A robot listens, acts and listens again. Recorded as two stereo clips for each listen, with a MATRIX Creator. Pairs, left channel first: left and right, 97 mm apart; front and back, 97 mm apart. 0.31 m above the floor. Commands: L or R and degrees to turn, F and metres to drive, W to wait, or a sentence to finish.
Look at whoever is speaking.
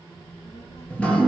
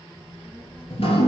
L85
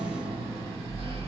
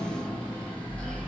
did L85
W
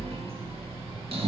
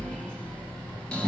W
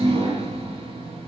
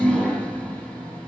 I heard a child speaking from this way, but can't make it out now.